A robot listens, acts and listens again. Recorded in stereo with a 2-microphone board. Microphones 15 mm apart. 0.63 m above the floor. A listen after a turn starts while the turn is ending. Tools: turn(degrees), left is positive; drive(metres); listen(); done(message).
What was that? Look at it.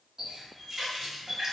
turn(degrees=-40)
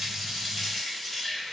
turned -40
done("Facing the running tap, under 1 m away.")